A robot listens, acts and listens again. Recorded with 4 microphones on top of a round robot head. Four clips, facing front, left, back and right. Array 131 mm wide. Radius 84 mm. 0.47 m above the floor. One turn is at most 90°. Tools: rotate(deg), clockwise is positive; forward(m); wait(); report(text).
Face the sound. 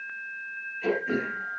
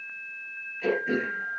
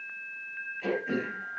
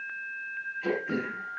rotate(-90)
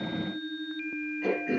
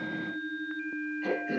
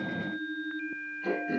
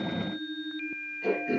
rotate(15)
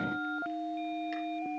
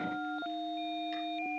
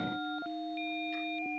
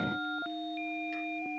wait()
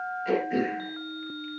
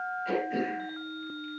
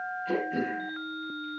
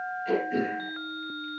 report("Facing the throat clearing.")